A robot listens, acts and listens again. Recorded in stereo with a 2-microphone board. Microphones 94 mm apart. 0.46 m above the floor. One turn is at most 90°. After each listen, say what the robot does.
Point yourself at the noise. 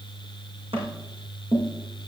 Turn 90° right.
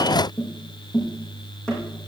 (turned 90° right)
Facing the tapping, over 4 m away.